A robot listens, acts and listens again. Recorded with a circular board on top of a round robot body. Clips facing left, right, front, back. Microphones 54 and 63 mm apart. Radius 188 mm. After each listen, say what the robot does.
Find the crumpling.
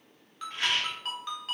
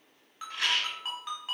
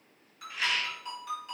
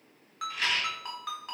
Keep listening.
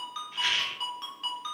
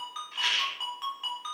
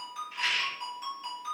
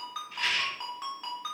Keep listening.
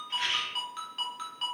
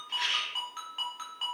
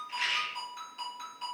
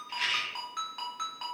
I can't make out crumpling to turn to.